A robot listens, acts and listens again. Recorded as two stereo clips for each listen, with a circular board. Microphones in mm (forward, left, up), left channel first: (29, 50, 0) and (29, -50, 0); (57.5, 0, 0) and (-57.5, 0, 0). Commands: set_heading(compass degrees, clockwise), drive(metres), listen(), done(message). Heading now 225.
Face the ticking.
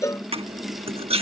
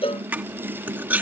listen()
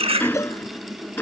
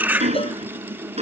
set_heading(65)
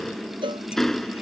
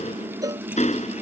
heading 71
done("Found it: ticking, straight ahead.")